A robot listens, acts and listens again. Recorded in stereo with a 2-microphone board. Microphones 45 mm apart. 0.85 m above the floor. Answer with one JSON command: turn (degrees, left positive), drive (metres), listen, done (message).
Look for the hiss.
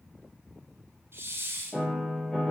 {"turn": -65}
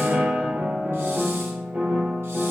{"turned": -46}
{"listen": true}
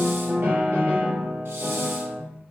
{"listen": true}
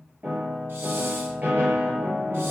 {"done": "I heard a hiss, but can't make it out now. It was about 20° right or 70° right."}